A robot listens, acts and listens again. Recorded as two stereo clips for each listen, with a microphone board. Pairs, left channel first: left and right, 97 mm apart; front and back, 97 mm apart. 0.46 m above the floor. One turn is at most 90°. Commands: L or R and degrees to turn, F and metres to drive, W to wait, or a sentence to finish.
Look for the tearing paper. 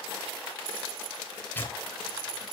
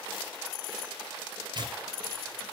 L90
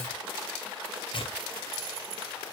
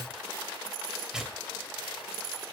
L90
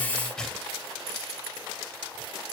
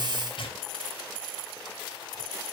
Facing the tearing paper, 2 to 4 m away.